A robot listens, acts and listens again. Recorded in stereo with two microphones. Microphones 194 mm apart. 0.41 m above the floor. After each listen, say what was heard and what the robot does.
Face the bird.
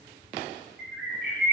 Turn 90° right.
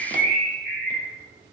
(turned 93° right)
Facing the bird.